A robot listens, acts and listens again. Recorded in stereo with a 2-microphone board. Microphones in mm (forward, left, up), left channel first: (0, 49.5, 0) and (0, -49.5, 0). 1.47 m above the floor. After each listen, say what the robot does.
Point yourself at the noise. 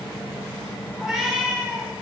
Turn 30° right.
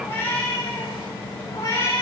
Turn 30° left.
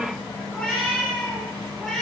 Found it: a cat meowing, straight ahead.